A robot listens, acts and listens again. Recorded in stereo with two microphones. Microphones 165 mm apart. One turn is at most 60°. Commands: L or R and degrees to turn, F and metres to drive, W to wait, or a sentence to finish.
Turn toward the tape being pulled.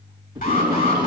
R25
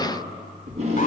R60
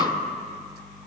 R60
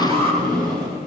R25
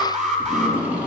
R10
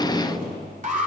Facing the tape being pulled.